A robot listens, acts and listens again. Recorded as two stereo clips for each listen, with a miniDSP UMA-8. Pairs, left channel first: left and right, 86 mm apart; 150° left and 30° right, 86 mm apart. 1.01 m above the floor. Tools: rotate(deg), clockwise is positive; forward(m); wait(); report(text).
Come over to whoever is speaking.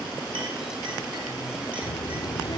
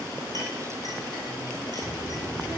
rotate(-50)
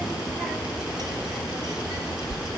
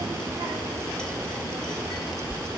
rotate(10)
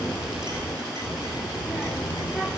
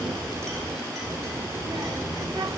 forward(1.0)
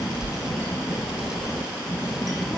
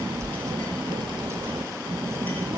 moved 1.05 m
rotate(10)
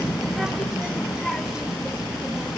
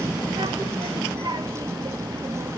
forward(1.0)
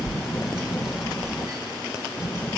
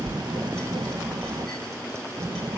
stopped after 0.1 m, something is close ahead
report("Arrived at the child speaking, straight ahead.")